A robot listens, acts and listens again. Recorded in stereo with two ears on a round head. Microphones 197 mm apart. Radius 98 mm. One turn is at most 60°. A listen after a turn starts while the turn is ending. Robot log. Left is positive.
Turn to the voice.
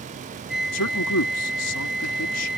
cmd yaw +60
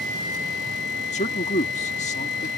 note: So it is at 30° left.
cmd yaw +30
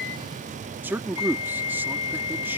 note: The man speaking is now 10° right.
cmd yaw -10
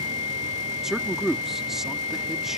end: Facing the man speaking.